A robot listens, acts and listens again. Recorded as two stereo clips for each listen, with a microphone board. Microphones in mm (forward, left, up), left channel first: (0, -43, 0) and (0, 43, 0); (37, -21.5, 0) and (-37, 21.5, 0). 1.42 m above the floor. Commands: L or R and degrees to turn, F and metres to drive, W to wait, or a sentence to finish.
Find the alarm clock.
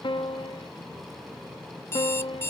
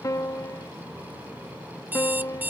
R145
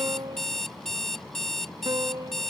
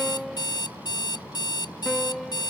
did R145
Facing the alarm clock.